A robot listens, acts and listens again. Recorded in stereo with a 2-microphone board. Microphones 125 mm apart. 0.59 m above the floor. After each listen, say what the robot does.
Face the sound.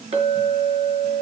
Turn 55° right.
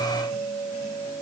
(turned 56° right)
Found it: a clink, straight ahead, over 4 m away.